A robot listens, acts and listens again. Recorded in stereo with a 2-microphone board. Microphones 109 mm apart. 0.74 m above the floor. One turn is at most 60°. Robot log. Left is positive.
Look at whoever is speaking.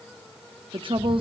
note: The woman speaking: about 50° right or 130° right.
cmd yaw -50
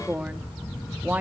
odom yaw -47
note: So it is at 15° right.
cmd yaw -15
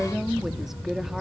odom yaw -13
end: Found it: a woman speaking, straight ahead, 1 to 2 m away.